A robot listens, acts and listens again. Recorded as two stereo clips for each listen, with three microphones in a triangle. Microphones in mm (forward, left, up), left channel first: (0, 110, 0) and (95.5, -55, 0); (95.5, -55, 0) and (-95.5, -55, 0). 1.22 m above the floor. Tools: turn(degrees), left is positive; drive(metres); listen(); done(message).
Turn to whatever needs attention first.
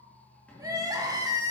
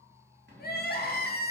turn(degrees=10)
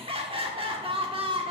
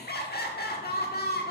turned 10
done("Facing the crying, 1 to 2 m away.")